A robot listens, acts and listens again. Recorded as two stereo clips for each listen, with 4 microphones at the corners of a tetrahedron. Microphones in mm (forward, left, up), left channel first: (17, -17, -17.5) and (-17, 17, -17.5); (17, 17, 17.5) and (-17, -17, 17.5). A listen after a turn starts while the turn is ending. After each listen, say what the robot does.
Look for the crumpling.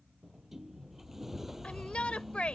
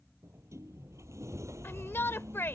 Keep listening.
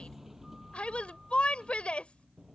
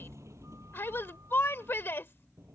Keep listening.
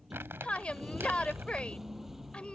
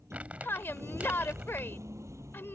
Turn 165° left.
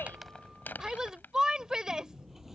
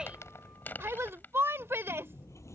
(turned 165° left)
Found it: crumpling, straight ahead.